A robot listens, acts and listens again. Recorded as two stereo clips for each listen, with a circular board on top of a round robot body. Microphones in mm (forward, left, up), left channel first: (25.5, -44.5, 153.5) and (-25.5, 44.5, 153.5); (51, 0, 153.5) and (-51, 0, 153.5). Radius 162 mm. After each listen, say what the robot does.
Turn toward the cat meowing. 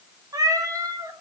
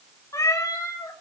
Turn 60° left.
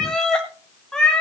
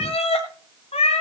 Turn 25° left.
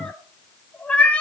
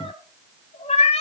Turn 20° left.
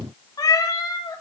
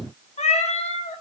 Found it: a cat meowing, straight ahead, 2 to 4 m away.